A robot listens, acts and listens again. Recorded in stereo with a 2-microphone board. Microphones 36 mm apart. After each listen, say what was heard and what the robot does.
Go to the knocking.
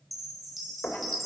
The knocking: about 70° left or 110° left. Turn 70° left.
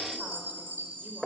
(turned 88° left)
So it is at 10° left. Turn 10° left.
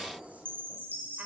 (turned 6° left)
Keep listening.
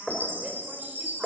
Drive 1.0 m forward.
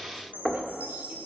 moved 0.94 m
Drive 1.0 m forward.
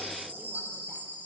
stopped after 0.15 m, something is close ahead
Keep listening.
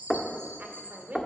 The knocking is now 15° left. Turn 15° left.
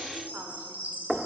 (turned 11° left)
Arrived at the knocking, straight ahead.